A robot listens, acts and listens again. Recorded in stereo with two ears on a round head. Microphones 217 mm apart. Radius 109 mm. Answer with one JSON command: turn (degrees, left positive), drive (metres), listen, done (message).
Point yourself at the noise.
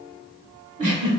{"turn": -35}
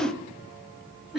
{"done": "Facing the giggle, 1 to 2 m away."}